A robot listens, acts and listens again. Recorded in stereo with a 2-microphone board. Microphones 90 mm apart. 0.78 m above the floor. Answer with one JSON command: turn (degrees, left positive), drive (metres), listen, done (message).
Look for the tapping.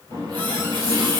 {"listen": true}
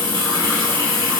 {"listen": true}
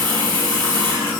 {"done": "I can't make out tapping, only a running tap."}